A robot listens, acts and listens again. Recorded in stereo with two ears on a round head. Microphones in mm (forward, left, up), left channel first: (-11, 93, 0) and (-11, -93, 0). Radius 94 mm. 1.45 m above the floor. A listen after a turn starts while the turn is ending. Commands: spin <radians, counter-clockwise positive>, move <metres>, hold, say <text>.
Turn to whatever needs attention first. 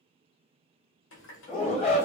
spin 0.52
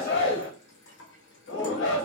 spin 2.01
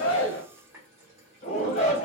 spin 0.61
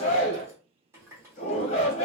spin 0.52
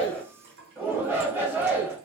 spin -0.17
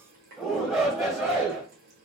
say Found it: a shout, straight ahead, 1 to 2 m away.